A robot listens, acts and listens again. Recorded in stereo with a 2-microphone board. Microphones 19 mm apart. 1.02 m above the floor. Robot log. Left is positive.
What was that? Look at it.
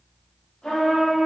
note: The trumpet: about 60° left or 120° left.
cmd yaw +60
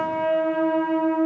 note: So it is at 25° left.
cmd yaw +25
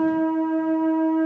note: The trumpet is now 10° right.
cmd yaw -10
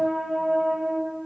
end: Found it: a trumpet, straight ahead.